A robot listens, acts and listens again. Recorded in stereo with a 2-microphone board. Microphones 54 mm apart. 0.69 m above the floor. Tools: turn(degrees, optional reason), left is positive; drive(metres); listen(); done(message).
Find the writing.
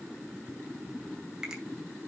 listen()
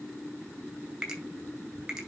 listen()
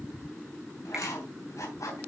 turn(degrees=90)
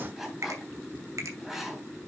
done("Facing the writing, 2 to 4 m away.")